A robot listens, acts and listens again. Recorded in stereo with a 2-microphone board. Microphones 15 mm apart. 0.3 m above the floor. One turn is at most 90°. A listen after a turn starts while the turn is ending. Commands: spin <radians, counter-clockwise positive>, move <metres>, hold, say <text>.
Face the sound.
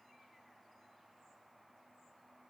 hold
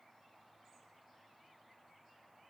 hold
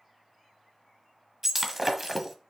spin -0.35
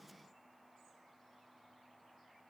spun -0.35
hold
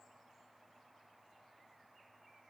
say I heard breaking glass, but can't make it out now. It was about straight ahead or 140° right.